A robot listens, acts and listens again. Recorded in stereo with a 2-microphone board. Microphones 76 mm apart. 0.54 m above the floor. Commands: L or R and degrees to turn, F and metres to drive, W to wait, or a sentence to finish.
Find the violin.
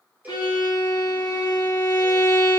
L75
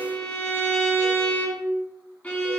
L20
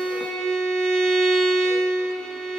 Facing the violin, under 1 m away.